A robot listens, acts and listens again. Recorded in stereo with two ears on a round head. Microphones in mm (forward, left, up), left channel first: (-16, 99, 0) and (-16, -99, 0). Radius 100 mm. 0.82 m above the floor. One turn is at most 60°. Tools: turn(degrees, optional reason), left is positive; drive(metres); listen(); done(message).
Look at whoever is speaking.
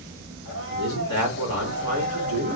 turn(degrees=60, reason="The man speaking: about 65° left or 115° left.")
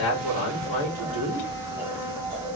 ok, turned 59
turn(degrees=25, reason="So it is at 25° left.")
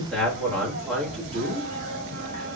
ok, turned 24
done("Found it: a man speaking, straight ahead.")